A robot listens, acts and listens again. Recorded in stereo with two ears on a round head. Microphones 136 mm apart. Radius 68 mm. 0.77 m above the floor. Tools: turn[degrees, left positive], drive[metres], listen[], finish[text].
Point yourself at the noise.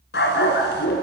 Thought: The dog barking: about 75° left or 105° left.
Action: turn[75]
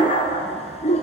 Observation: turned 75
Thought: So it is at 45° left.
Action: turn[45]
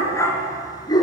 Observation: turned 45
Thought: The dog barking is now 25° left.
Action: turn[25]
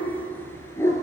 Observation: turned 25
Thought: The dog barking is now 20° left.
Action: turn[20]
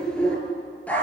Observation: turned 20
Thought: The dog barking is now 10° left.
Action: turn[10]
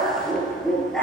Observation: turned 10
Action: finish[Found it: a dog barking, straight ahead.]